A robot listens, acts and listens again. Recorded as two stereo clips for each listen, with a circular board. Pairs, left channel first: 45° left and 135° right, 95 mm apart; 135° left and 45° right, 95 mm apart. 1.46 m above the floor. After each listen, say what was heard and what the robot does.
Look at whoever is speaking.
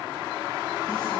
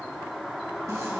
Keep listening.
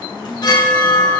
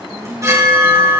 Keep listening.
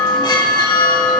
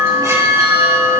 I can't make out anyone speaking to turn to.